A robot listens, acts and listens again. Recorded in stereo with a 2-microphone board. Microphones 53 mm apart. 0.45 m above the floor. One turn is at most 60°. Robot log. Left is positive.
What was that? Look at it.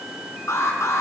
note: The alarm: about 70° left or 110° left.
cmd yaw +60
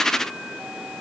cmd idle
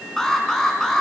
note: So it is at 10° left.
cmd yaw +10
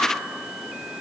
cmd idle
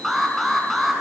end: Facing the alarm, over 4 m away.